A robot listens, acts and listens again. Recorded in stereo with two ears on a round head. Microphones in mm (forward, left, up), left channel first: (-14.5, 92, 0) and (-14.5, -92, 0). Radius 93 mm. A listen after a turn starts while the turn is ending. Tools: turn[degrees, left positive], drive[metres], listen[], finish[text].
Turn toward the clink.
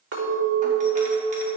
Thought: The clink: about 60° right or 120° right.
Action: turn[-60]
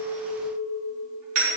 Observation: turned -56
Action: finish[Found it: a clink, straight ahead.]